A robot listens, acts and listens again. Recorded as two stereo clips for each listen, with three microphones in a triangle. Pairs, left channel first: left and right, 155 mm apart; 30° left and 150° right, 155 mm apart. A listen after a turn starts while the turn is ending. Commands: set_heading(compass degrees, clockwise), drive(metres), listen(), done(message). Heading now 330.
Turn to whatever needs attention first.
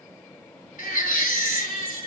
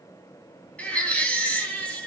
set_heading(220)
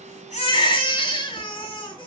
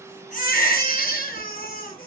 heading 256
set_heading(221)
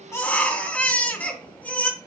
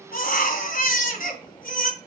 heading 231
set_heading(221)
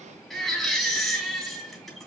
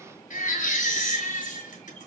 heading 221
done("Found it: a baby crying, straight ahead.")